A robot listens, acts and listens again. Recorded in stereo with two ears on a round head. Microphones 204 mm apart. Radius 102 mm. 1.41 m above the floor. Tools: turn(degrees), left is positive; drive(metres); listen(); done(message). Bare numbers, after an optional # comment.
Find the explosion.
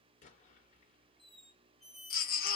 # The explosion: about 35° left or 145° left.
turn(35)
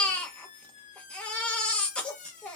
listen()
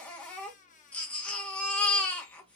done("I heard an explosion, but can't make it out now. It was about straight ahead or 110° left.")